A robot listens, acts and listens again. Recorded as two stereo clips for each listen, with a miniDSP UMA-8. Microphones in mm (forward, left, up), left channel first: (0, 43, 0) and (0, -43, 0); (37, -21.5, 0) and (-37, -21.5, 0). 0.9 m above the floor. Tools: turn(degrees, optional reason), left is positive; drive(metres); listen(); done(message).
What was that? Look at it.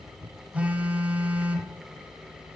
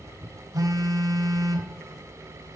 turn(degrees=-160, reason="The phone buzzing: 160° right.")
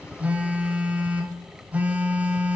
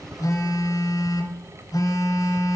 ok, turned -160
turn(degrees=-20, reason="The phone buzzing is now 20° right.")
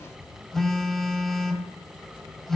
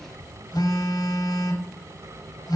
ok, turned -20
done("Facing the phone buzzing.")